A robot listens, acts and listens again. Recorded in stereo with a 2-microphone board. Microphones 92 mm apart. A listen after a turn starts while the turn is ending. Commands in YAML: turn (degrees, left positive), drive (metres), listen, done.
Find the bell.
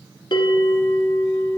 turn: 60
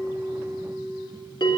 turn: 60
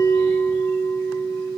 turn: 10
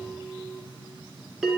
done: "Facing the bell."